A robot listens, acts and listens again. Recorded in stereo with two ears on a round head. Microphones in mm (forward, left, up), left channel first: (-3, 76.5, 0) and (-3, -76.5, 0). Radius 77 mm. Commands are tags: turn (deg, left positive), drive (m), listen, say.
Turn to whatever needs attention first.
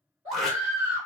<turn deg="-30"/>
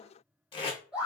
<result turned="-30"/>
<say>Found it: a scream, straight ahead.</say>